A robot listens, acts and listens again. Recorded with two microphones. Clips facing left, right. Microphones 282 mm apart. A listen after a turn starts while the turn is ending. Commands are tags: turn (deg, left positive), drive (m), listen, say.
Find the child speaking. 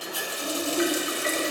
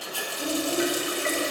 <turn deg="-20"/>
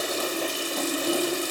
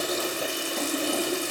<turn deg="10"/>
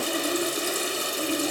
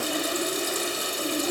<say>Facing the child speaking, 2 to 4 m away.</say>